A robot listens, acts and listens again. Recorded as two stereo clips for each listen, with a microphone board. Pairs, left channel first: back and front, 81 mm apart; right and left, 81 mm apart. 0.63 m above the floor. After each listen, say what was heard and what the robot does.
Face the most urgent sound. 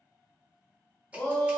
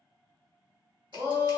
The shout: 120° left. Turn 120° left.
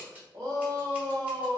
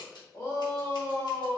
The shout is now 25° right. Turn 25° right.
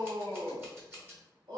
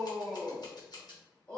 The shout is now 15° right. Turn 15° right.
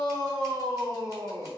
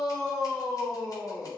Found it: a shout, straight ahead.